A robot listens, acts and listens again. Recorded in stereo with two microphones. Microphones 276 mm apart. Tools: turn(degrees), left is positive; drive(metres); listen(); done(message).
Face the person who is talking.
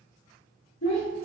turn(degrees=70)
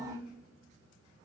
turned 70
turn(degrees=35)
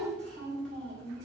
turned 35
done("Found it: a child speaking, straight ahead, 1 to 2 m away.")